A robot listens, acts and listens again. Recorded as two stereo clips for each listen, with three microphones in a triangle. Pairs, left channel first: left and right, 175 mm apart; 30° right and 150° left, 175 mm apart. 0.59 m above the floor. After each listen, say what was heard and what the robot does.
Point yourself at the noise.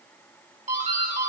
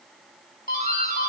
The doorbell: 50° right. Turn 50° right.
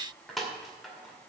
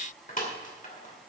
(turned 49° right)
Facing the doorbell.